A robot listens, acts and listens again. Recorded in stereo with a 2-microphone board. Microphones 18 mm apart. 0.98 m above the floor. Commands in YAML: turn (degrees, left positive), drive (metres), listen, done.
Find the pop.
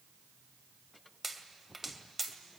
turn: -20
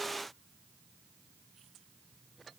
listen: true
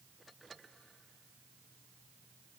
done: "I heard a pop, but can't make it out now. It was about straight ahead or 140° right."